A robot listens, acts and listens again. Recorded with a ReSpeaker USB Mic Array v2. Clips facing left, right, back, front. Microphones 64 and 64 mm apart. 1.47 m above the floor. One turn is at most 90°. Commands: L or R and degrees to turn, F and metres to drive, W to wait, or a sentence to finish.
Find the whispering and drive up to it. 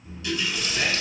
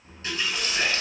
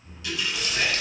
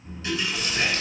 R90
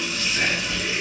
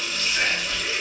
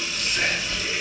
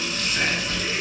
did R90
R35
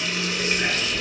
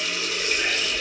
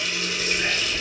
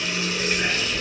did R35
F1.0
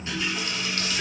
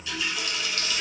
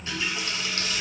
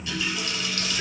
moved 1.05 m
L15
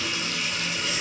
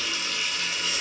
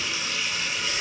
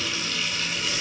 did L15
W
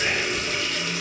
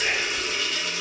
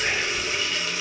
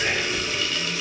F1.0
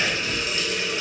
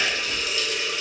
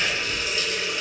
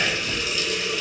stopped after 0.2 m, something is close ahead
Arrived at the whispering, straight ahead.